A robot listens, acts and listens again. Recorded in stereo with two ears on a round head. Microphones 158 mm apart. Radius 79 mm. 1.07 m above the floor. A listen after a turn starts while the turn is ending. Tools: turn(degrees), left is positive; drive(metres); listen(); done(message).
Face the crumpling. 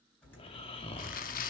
turn(degrees=50)
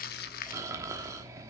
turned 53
listen()
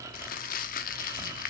turn(degrees=65)
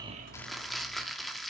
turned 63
done("Found it: crumpling, straight ahead, under 1 m away.")